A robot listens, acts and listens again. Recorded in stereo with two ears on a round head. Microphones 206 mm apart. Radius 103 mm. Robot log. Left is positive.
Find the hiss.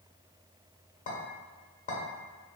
cmd idle
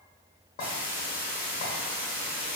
cmd yaw -30
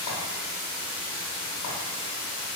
note: So it is at 20° left.
cmd yaw +20
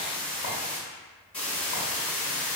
end: Found it: a hiss, straight ahead, under 1 m away.